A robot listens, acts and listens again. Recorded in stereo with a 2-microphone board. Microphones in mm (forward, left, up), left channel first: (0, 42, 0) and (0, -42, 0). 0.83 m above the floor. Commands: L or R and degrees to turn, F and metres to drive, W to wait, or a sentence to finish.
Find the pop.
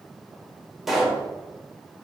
R30
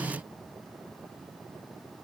W
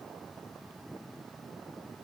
I heard a pop, but can't make it out now. It was about 25° left or 145° right.